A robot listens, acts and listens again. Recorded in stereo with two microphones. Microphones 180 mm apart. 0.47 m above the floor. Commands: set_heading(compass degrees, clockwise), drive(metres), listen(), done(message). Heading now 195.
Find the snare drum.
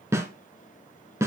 set_heading(210)
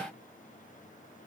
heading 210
listen()
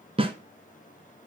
set_heading(0)
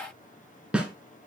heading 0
done("Facing the snare drum.")